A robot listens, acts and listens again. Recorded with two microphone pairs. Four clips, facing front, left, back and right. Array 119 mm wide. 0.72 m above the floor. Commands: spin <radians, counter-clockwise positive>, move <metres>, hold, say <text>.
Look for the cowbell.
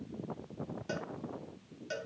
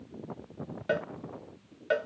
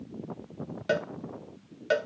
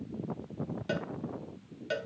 spin 2.36
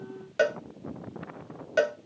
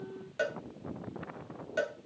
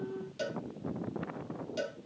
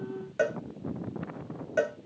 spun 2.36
spin -0.26
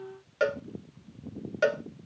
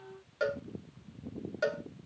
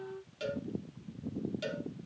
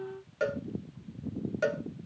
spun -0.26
say Found it: a cowbell, straight ahead.